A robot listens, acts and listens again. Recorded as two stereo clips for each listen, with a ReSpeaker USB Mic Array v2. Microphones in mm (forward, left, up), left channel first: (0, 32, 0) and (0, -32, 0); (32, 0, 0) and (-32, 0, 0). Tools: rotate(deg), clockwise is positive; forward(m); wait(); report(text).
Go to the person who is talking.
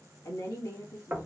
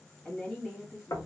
rotate(-65)
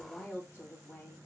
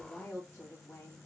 rotate(-30)
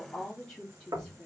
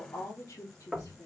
rotate(-10)
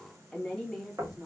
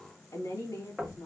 forward(1.0)
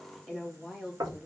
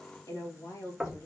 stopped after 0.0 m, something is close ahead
report("Blocked. The woman speaking is further on, straight ahead.")